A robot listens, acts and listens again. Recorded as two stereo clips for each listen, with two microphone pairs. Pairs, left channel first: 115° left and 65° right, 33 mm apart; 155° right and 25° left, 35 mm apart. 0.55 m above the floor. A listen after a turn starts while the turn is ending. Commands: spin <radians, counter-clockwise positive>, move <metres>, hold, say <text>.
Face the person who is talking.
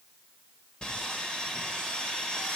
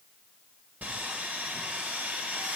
hold
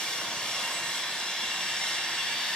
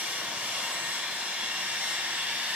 hold
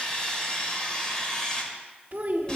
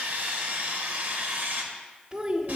spin -0.52
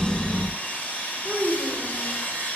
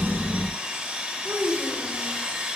say Facing the child speaking, under 1 m away.